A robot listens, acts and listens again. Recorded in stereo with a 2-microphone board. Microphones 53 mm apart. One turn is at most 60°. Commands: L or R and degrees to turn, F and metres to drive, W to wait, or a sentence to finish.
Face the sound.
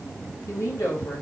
L60
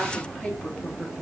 Facing the woman speaking, 2 to 4 m away.